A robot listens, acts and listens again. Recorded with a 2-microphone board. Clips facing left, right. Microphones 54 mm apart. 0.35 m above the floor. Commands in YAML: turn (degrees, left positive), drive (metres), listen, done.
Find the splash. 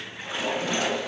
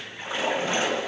turn: -35
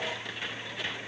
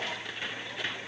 listen: true
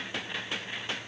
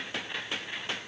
done: "I heard a splash, but can't make it out now. It was about straight ahead or 110° right."